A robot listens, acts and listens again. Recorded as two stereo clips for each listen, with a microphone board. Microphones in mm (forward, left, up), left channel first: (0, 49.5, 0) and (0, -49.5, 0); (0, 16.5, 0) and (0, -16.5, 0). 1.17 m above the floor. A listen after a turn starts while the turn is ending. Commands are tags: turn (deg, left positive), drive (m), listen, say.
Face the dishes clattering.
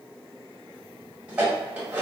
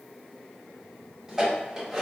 <turn deg="-30"/>
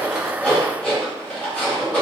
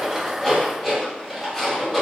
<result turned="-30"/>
<turn deg="15"/>
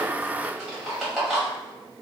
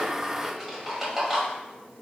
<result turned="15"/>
<say>Found it: dishes clattering, straight ahead.</say>